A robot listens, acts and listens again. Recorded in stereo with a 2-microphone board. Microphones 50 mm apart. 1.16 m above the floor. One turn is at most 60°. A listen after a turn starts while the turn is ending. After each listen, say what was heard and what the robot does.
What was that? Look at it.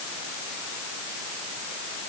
Keep listening.
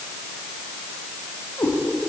The cat meowing: about 65° left or 115° left. Turn 60° left.
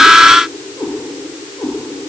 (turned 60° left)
So it is at 55° left. Turn 55° left.
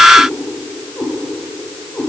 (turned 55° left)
The cat meowing is now 30° left. Turn 30° left.
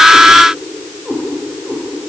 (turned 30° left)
Found it: a cat meowing, straight ahead.